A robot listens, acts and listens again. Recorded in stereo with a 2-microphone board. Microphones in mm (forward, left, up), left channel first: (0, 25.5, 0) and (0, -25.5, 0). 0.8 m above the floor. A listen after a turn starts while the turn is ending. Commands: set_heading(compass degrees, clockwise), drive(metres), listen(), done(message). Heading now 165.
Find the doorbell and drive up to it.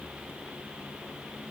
listen()
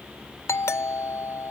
set_heading(90)
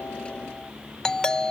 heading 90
set_heading(75)
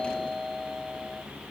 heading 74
drive(1.0)
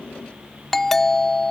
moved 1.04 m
drive(1.0)
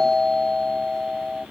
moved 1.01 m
set_heading(64)
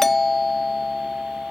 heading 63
drive(1.0)
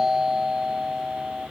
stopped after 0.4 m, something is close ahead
set_heading(73)
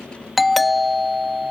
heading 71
done("I am next to the doorbell.")